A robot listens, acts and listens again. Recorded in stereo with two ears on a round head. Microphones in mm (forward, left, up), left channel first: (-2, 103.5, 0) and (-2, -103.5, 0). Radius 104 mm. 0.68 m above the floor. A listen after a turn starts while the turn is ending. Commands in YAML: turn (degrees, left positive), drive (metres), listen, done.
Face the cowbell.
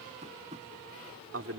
listen: true
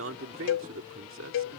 turn: 60
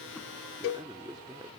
turn: 60
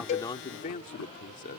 listen: true
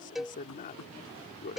done: "Found it: a cowbell, straight ahead."